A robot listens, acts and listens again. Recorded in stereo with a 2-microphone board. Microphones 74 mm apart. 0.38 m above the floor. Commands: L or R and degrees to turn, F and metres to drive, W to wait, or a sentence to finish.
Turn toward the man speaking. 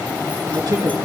R60
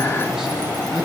W
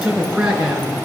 R15
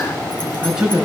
R10
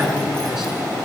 Facing the man speaking, over 4 m away.